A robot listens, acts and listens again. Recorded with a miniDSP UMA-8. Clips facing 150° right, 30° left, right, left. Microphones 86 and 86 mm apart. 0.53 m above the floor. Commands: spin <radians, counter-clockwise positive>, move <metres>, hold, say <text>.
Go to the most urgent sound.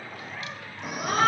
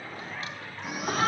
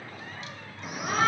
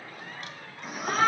spin -2.97
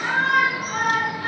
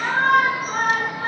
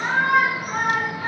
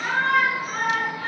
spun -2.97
spin -0.35
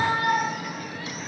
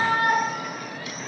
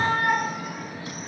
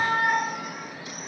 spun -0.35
move 1.0
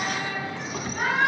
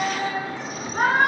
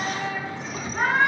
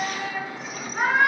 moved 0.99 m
move 1.0
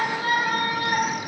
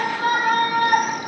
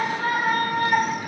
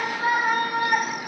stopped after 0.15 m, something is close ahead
spin 0.26
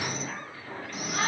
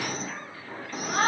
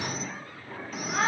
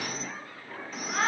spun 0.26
say Arrived at the shout, straight ahead.